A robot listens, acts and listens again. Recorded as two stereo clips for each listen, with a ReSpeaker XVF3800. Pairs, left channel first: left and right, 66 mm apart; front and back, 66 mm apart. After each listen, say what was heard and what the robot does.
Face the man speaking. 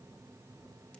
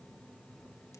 Keep listening.
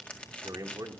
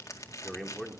The man speaking: 90° right. Turn 90° right.
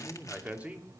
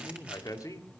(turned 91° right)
The man speaking is now 25° right. Turn 25° right.
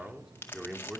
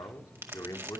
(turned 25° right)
The man speaking is now 15° right. Turn 15° right.
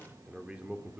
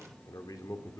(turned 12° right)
The man speaking is now 20° right. Turn 20° right.
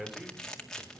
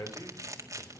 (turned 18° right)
Facing the man speaking, 2 to 4 m away.